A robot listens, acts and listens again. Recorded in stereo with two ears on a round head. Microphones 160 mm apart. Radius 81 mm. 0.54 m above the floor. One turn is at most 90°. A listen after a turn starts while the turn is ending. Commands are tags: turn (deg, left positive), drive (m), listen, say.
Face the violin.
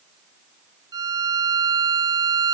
<turn deg="-20"/>
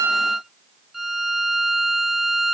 <say>Found it: a violin, straight ahead.</say>